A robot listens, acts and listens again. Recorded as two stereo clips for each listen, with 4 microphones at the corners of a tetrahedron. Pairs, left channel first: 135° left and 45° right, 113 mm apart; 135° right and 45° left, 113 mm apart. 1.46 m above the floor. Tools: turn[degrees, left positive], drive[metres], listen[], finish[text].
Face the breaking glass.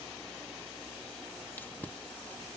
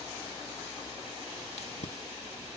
Action: listen[]
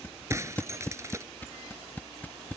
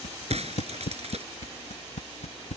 Thought: The breaking glass: 20° left.
Action: turn[20]
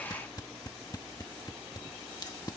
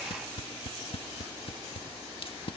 Action: finish[Facing where the breaking glass came from. I can't hear it now.]